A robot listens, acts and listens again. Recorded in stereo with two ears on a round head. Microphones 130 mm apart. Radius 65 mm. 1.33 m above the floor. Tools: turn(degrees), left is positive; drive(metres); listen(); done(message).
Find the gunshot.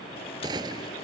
turn(degrees=-30)
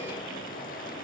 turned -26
listen()
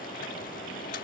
done("I heard a gunshot, but can't make it out now. It was about 5° right or 125° right.")